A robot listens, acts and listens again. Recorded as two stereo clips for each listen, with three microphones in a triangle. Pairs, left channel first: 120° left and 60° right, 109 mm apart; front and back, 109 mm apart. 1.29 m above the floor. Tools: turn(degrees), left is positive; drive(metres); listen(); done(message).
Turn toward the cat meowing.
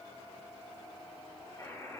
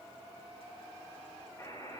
listen()
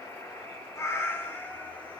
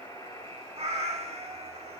turn(degrees=-165)
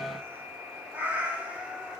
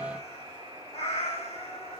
turn(degrees=20)
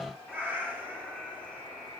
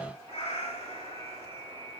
turn(degrees=15)
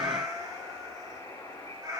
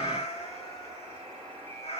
done("Found it: a cat meowing, straight ahead.")